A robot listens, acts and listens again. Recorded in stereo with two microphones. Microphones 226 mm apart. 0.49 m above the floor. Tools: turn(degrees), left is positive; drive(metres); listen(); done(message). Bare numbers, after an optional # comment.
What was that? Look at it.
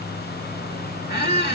# The squeak: about 45° left or 135° left.
turn(45)
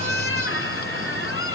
# So it is at 85° left.
turn(85)
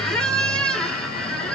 done("Facing the squeak.")